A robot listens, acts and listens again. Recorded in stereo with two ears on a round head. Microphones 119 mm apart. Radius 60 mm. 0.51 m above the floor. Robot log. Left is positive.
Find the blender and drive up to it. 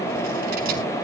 cmd idle
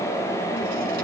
cmd idle
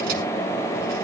end: I can't make out a blender.